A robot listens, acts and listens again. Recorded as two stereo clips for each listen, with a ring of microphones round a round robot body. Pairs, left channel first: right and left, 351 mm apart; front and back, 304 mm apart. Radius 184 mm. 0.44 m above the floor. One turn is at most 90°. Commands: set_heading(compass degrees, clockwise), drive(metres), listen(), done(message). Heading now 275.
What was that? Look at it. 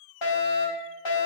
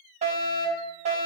set_heading(5)
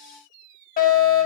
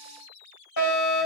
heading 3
set_heading(28)
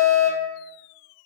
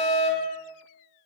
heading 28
done("Found it: a fire alarm, straight ahead, over 4 m away.")